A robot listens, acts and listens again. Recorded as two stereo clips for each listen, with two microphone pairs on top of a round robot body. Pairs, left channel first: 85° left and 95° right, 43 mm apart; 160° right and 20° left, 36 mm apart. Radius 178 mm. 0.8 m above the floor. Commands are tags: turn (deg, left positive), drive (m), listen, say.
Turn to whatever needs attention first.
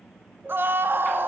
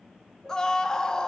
<turn deg="-90"/>
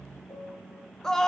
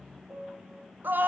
<say>Facing the scream, 2 to 4 m away.</say>